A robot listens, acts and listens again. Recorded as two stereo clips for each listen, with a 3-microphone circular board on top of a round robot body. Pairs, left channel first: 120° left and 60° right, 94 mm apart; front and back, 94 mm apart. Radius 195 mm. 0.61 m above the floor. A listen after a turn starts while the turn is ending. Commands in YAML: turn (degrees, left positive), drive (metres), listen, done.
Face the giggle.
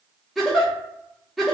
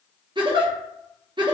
turn: -150
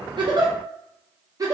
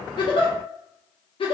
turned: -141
turn: -10
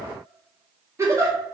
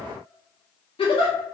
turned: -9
done: "Found it: a giggle, straight ahead."